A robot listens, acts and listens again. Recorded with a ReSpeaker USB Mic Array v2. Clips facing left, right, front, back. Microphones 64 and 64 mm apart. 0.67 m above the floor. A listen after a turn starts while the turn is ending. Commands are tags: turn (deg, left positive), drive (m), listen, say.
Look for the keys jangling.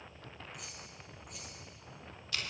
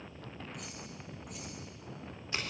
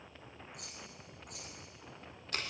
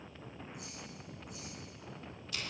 <say>Found it: keys jangling, straight ahead, 2 to 4 m away.</say>